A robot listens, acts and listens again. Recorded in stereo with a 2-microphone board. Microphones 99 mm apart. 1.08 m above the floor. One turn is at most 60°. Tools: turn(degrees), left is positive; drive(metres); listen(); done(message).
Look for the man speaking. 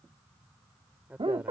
turn(degrees=-30)
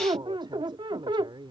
turn(degrees=-60)
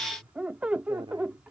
turn(degrees=-60)
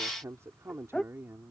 turn(degrees=-25)
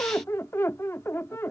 listen()
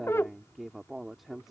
done("Facing the man speaking.")